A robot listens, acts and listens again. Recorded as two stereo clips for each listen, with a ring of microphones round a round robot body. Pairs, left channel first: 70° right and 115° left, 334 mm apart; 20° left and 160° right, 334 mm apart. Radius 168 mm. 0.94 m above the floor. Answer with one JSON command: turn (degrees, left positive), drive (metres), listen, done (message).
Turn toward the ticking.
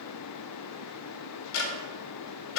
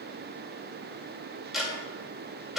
{"turn": -70}
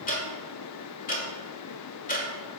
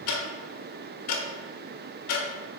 {"done": "Facing the ticking, 1 to 2 m away."}